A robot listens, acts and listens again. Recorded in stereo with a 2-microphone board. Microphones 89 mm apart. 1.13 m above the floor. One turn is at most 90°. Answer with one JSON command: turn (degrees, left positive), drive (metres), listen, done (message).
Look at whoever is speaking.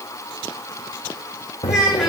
{"turn": -30}
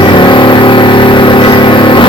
{"listen": true}
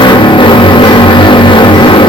{"listen": true}
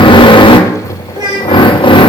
{"turn": -90}
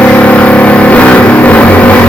{"turn": -35}
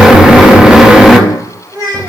{"turn": -45}
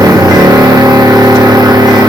{"listen": true}
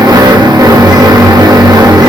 {"listen": true}
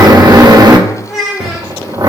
{"done": "Facing the child speaking."}